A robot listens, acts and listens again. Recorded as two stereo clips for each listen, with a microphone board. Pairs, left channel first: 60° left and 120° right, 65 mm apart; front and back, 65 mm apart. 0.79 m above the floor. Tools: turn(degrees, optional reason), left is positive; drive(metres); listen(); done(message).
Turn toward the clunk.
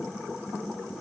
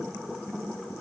listen()
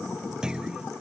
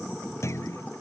turn(degrees=-40, reason="The clunk: 40° right.")
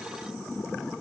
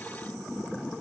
done("I heard a clunk from this way, but can't make it out now.")